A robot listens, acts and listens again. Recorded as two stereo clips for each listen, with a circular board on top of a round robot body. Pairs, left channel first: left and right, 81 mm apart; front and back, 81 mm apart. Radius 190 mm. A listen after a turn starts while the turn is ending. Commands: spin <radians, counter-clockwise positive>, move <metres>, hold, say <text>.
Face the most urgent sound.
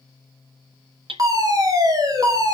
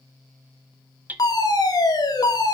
spin -0.79
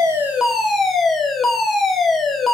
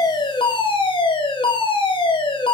say Facing the fire alarm.